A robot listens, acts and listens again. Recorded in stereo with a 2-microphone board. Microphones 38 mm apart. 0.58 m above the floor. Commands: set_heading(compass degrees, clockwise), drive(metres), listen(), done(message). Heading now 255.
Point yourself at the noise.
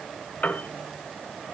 set_heading(210)
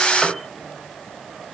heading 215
set_heading(205)
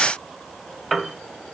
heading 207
done("Facing the piano, 1 to 2 m away.")